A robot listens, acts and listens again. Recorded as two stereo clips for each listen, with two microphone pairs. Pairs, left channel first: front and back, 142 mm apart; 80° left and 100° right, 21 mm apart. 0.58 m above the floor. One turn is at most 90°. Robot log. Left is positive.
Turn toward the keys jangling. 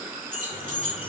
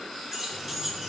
note: The keys jangling: 175° left.
cmd yaw +90
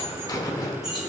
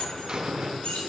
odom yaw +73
note: Nothing new. It was at 100° left.
cmd yaw +90
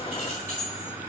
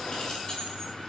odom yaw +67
note: Nothing new. It was at 35° left.
cmd yaw +35
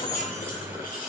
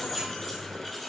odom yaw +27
end: I heard keys jangling from this way, but can't make it out now.